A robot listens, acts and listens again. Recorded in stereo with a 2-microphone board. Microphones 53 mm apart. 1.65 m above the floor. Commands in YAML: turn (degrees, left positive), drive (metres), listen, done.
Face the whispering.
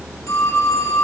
listen: true
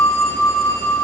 listen: true
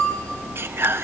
turn: -50
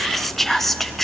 done: "Facing the whispering, under 1 m away."